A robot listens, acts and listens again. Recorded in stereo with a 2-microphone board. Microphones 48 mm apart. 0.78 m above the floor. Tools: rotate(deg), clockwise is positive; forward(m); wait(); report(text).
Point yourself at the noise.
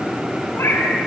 rotate(-70)
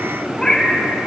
rotate(-10)
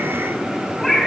report("Facing the cat meowing.")